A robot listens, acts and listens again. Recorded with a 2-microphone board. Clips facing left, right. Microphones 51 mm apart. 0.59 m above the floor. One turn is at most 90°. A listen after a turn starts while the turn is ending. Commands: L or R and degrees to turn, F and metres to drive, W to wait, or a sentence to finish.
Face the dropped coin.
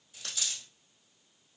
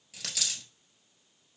R75
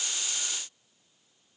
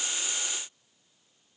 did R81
W
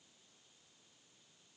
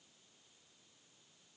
I heard a dropped coin, but can't make it out now. It was about 5° left or 25° right.